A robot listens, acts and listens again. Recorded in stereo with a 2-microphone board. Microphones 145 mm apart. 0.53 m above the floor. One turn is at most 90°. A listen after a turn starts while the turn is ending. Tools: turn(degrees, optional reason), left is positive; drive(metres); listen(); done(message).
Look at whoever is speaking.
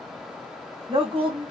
turn(degrees=-40, reason="The woman speaking: about 40° right or 140° right.")
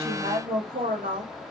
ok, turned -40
turn(degrees=-90, reason="So it is at 105° right.")
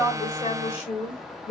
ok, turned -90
turn(degrees=50, reason="The woman speaking is now 50° left.")
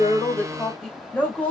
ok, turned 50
turn(degrees=10, reason="The woman speaking is now 10° left.")
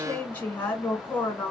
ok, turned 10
turn(degrees=10, reason="The woman speaking is now 10° left.")
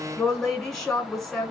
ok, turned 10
done("Facing the woman speaking, 1 to 2 m away.")